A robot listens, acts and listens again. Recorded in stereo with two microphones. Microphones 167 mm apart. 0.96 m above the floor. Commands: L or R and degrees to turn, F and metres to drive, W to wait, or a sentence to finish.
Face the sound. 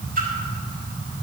R60
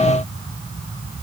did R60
W
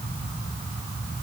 I heard a splash, but can't make it out now. It was about straight ahead or 60° right.